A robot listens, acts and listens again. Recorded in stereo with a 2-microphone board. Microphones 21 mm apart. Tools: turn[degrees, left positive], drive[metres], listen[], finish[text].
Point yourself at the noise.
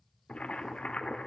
Action: turn[90]
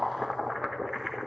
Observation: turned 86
Thought: So it is at 10° right.
Action: turn[-10]
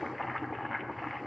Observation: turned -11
Action: finish[Facing the boiling, under 1 m away.]